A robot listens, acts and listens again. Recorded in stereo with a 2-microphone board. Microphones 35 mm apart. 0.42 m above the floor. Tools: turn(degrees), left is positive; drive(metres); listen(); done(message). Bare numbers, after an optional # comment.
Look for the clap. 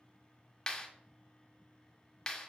# The clap: about 25° left or 155° left.
turn(25)
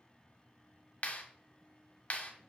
# So it is at 130° left.
turn(130)
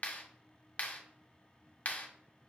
# The clap is now 50° left.
turn(50)
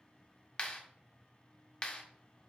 # The clap is now 25° left.
turn(25)
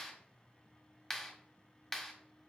# The clap is now 10° left.
turn(10)
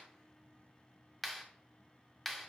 done("Facing the clap, 1 to 2 m away.")